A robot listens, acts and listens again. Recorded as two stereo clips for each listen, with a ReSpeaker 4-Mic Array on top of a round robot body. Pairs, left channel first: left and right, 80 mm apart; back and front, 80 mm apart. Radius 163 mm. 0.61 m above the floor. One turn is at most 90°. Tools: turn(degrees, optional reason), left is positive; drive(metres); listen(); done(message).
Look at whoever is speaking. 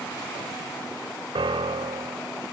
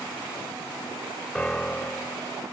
listen()
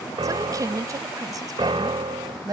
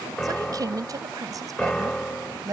turn(degrees=-50, reason="The woman speaking: 50° right.")
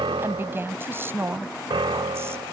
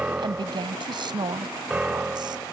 turn(degrees=-30, reason="The woman speaking is now 30° right.")
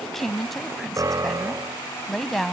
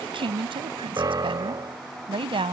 done("Facing the woman speaking.")